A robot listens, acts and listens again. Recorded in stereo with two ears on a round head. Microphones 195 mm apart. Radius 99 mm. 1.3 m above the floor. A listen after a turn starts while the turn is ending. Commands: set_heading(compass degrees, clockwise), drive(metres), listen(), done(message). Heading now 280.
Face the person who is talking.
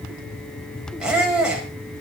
listen()
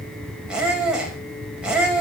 listen()
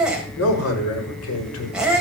set_heading(205)
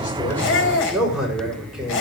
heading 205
done("Facing the man speaking.")